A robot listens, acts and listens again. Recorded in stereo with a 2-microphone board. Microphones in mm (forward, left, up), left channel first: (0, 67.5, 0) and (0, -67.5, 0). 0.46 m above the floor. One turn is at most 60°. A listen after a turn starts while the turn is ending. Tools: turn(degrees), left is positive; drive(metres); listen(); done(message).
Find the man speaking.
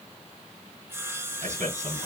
turn(degrees=-60)
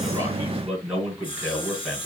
done("Found it: a man speaking, straight ahead.")